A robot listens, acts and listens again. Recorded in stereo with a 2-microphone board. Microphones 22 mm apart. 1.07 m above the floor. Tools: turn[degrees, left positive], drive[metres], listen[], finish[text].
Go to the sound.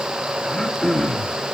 Thought: The throat clearing: about 25° left or 155° left.
Action: turn[25]
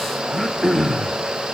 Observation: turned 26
Action: drive[1.0]
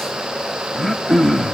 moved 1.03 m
Thought: The throat clearing is now 10° left.
Action: turn[10]
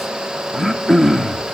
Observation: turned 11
Action: drive[1.0]
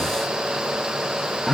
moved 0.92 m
Action: drive[1.0]
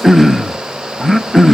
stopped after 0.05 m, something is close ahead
Action: finish[I am next to the throat clearing.]